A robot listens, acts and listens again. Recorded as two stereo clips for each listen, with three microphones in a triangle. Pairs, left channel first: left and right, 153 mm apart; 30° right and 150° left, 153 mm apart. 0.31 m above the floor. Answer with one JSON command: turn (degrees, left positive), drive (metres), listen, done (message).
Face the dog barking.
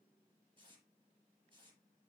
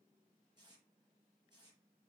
{"listen": true}
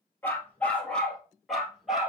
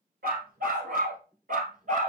{"turn": -175}
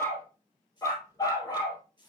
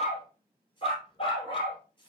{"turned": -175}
{"turn": 25}
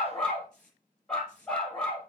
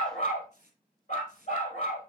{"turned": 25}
{"done": "Found it: a dog barking, straight ahead, 2 to 4 m away."}